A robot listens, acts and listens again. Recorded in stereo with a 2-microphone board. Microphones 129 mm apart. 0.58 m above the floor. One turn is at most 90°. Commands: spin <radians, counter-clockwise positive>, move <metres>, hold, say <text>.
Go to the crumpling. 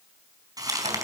spin -0.52
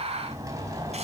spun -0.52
hold
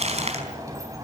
spin -1.57
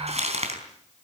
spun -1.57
spin -1.05
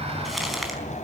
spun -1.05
move 1.0
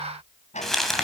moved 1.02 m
move 1.0
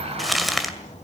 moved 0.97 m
move 1.0
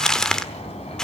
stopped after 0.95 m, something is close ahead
say I am next to the crumpling.